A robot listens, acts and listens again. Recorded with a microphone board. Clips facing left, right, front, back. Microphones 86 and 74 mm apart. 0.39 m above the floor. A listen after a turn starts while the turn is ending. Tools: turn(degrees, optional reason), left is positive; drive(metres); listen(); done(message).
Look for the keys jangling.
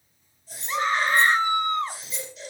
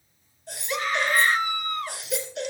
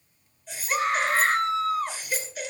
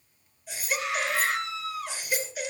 turn(degrees=105, reason="The keys jangling: 105° left.")
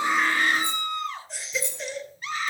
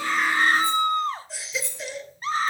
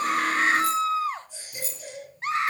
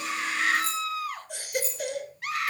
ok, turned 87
turn(degrees=20, reason="The keys jangling is now 20° left.")
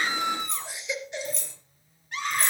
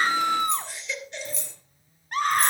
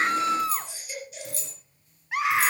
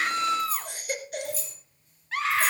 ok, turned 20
done("Found it: keys jangling, straight ahead, over 4 m away.")